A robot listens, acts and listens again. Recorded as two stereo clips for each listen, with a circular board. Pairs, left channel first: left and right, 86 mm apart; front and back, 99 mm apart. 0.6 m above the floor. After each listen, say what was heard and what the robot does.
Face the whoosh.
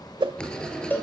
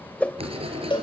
The whoosh: 75° right. Turn 75° right.
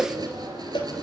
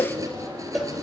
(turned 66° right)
The whoosh is now 10° right. Turn 10° right.
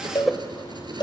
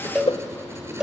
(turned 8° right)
Found it: a whoosh, straight ahead.